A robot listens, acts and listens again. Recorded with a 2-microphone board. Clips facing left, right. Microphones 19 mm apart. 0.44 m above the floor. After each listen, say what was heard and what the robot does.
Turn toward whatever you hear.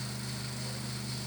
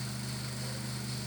Keep listening.
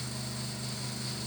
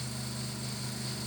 Keep listening.
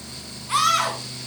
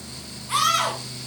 Turn 30° left.
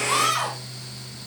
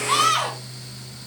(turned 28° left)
So it is at 15° right. Turn 15° right.
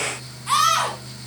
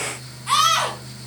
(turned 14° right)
Facing the scream, 2 to 4 m away.